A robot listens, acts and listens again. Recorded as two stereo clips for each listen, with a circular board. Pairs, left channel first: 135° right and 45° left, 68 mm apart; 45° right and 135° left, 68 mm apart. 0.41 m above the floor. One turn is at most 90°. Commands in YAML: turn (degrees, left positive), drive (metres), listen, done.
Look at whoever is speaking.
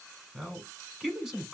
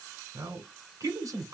turn: 90
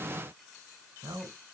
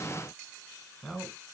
turn: 30
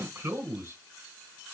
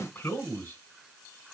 done: "Found it: a man speaking, straight ahead, 1 to 2 m away."